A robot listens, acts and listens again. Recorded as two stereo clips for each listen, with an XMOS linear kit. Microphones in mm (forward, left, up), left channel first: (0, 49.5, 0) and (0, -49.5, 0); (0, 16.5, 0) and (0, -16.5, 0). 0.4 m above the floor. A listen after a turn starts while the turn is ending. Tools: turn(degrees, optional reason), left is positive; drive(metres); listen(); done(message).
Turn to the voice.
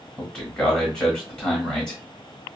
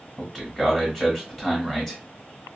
turn(degrees=30)
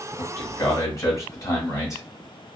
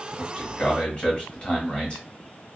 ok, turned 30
turn(degrees=140, reason="So it is at 140° left.")
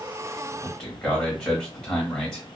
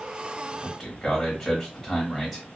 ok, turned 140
turn(degrees=10, reason="The man speaking is now 10° left.")
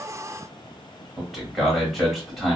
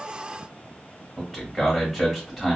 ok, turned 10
done("Found it: a man speaking, straight ahead.")